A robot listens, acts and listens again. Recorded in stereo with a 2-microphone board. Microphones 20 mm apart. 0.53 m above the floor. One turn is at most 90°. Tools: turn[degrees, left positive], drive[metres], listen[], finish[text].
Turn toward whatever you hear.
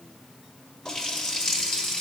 Thought: The running tap: about 35° left or 145° left.
Action: turn[35]
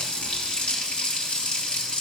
Thought: So it is at 105° left.
Action: turn[90]
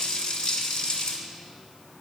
Thought: The running tap is now 50° left.
Action: turn[50]
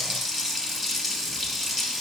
Action: finish[Facing the running tap, 1 to 2 m away.]